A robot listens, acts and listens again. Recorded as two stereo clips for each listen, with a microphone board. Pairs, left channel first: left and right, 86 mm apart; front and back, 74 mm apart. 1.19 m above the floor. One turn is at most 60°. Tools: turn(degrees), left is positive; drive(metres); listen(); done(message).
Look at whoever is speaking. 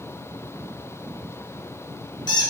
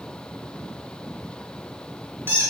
listen()
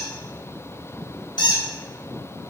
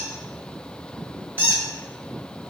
listen()
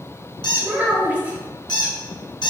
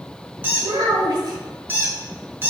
turn(degrees=-60)
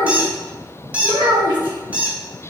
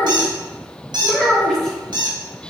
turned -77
turn(degrees=-60)
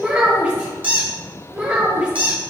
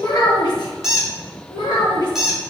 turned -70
turn(degrees=-15)
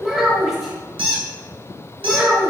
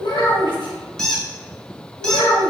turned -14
done("Facing the child speaking.")